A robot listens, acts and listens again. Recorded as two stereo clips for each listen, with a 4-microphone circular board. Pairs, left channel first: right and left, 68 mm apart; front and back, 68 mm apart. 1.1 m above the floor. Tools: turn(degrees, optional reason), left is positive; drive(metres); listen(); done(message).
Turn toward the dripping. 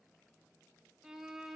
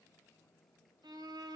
listen()
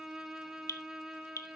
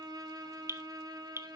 turn(degrees=-130, reason="The dripping: 130° right.")
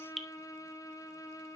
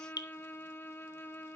done("Found it: dripping, straight ahead.")